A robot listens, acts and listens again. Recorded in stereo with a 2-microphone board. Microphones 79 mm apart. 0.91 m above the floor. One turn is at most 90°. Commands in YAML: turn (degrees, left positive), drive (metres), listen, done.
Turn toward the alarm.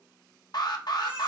turn: 60
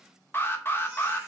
turn: 35
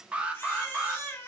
turn: -15
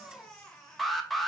done: "Facing the alarm, under 1 m away."